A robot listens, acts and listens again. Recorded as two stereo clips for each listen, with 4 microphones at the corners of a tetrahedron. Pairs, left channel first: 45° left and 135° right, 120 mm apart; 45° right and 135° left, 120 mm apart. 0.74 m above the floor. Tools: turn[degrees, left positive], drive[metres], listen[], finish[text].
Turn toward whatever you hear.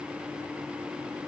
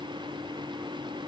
Action: listen[]
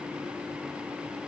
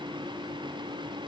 Action: listen[]
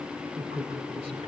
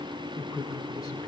Thought: The man speaking: 100° right.
Action: turn[-100]
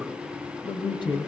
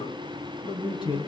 Action: finish[Facing the man speaking, over 4 m away.]